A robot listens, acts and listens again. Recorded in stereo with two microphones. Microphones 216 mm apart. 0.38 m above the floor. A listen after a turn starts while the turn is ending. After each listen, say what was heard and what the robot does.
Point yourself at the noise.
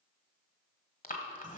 The breathing: about 40° left or 140° left. Turn 40° left.
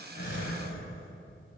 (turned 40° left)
So it is at 100° left. Turn 100° left.
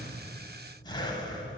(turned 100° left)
The breathing is now 20° left. Turn 20° left.
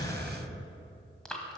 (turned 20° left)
Found it: breathing, straight ahead.